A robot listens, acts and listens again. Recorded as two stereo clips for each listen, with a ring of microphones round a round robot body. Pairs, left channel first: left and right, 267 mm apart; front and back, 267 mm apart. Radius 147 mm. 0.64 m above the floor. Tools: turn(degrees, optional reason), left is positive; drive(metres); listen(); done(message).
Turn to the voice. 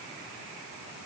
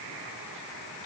listen()
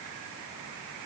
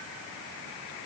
listen()
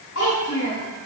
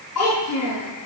turn(degrees=40, reason="The child speaking: 40° left.")
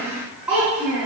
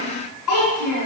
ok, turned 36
done("Found it: a child speaking, straight ahead, over 4 m away.")